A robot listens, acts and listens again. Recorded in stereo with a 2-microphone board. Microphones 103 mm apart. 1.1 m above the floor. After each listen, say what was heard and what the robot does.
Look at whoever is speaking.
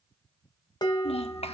Turn 90° left.
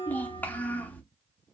So it is at 15° left. Turn 15° left.
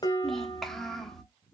Facing the child speaking, 1 to 2 m away.